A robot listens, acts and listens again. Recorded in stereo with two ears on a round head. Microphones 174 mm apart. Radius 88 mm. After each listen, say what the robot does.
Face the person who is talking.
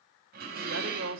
Turn 70° right.
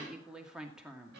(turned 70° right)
Facing the woman speaking.